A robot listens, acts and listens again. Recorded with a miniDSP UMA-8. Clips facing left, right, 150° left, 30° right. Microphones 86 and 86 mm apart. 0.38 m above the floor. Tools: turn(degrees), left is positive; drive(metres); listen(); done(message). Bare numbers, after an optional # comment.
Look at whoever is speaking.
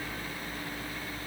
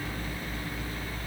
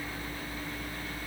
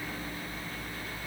listen()
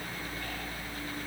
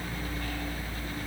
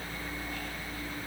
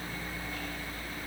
listen()
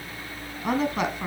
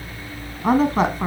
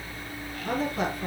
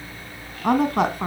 # The woman speaking: 45° right.
turn(-45)
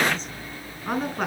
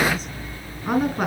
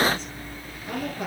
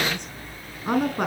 done("Found it: a woman speaking, straight ahead, over 4 m away.")